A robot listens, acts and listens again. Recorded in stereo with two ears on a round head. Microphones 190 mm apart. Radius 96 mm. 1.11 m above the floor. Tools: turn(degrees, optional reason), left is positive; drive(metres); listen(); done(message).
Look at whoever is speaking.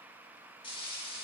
listen()
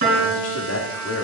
turn(degrees=70, reason="The man speaking: about 70° left or 110° left.")
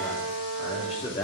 turn(degrees=35, reason="So it is at 35° left.")
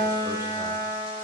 listen()
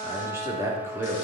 turn(degrees=-15, reason="The man speaking is now 15° right.")
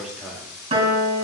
done("Found it: a man speaking, straight ahead, 2 to 4 m away.")